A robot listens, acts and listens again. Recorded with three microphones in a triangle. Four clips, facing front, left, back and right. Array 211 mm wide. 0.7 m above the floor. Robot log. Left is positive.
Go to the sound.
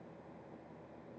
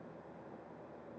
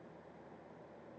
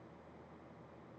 cmd idle
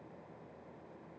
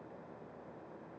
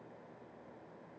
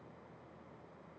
cmd idle
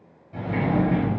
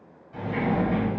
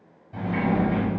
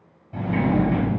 note: The sliding door: 90° right.
cmd yaw -90
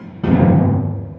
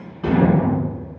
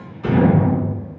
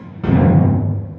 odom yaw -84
cmd fwd 1.0
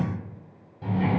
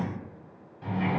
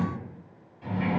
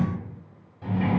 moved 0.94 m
cmd fwd 1.0
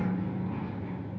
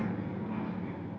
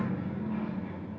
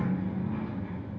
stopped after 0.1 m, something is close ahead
end: Arrived at the sliding door, straight ahead.